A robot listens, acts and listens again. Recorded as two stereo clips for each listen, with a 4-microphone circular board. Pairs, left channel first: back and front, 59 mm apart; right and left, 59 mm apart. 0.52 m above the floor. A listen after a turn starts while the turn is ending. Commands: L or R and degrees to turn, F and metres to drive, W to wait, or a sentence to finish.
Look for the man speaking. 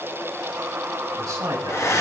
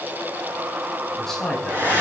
R10
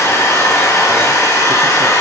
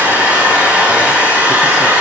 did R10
W
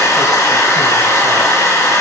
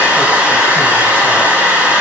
W
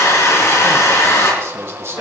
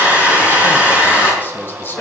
R40
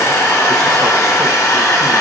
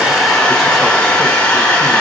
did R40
W
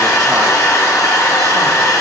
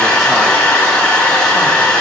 W
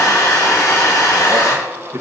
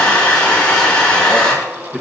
Found it: a man speaking, straight ahead, 2 to 4 m away.